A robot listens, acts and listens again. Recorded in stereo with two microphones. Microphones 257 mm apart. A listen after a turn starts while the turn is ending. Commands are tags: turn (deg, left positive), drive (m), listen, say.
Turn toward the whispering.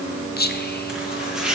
<turn deg="40"/>
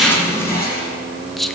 <say>Found it: whispering, straight ahead.</say>